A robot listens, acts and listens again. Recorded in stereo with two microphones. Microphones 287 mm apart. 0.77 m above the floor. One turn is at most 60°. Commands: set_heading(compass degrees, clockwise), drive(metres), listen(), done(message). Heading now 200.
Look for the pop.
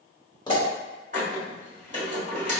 set_heading(185)
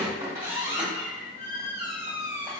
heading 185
listen()
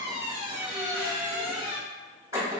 done("I heard a pop, but can't make it out now. It was about straight ahead or 150° left.")